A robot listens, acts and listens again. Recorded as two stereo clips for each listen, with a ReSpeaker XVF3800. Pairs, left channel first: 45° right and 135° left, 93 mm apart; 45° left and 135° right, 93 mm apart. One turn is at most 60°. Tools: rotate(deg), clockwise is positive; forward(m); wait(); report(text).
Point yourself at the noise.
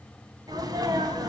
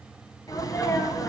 rotate(-60)
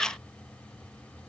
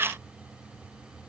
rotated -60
rotate(-30)
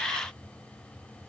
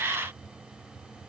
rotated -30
report("I heard a sneeze from this way, but can't make it out now.")